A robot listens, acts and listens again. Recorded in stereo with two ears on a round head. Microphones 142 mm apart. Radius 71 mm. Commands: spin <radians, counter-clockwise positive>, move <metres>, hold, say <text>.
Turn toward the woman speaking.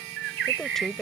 spin 0.52
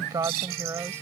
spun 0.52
spin -0.26
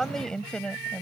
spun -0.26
spin 0.17
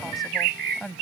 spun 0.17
say Facing the woman speaking.